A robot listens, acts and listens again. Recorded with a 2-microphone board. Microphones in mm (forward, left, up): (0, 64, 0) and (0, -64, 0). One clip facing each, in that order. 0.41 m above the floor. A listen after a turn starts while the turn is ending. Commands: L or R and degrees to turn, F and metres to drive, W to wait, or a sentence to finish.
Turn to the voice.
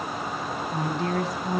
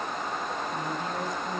L90
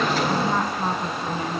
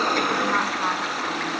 W
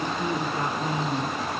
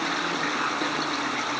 W
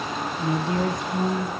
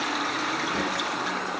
L25
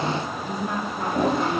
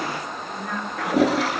L20
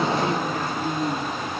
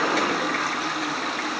Facing the woman speaking, over 4 m away.